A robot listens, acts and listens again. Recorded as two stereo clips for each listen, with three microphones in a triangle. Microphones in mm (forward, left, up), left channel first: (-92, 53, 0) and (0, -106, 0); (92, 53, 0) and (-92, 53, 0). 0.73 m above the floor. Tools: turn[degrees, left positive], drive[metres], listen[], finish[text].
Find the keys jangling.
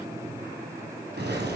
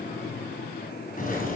Thought: The keys jangling: 40° right.
Action: turn[-40]
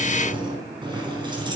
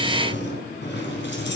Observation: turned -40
Action: finish[Found it: keys jangling, straight ahead, over 4 m away.]